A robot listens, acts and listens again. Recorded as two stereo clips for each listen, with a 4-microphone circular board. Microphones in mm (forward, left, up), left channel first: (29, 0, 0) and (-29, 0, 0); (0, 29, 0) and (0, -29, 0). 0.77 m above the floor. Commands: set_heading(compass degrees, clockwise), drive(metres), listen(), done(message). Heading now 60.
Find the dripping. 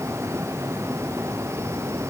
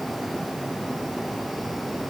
listen()
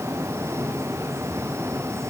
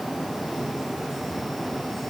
listen()
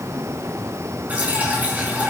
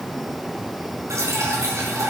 set_heading(175)
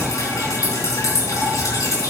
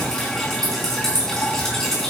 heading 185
set_heading(175)
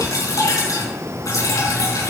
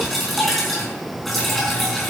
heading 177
done("Found it: dripping, straight ahead, over 4 m away.")